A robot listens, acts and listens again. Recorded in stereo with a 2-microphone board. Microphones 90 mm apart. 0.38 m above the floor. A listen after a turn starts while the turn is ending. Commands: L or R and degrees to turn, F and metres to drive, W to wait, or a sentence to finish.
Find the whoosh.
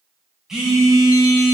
W
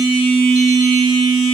W
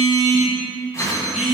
L30
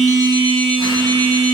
W
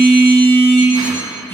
W
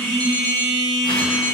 I heard a whoosh, but can't make it out now. It was about straight ahead or 120° left.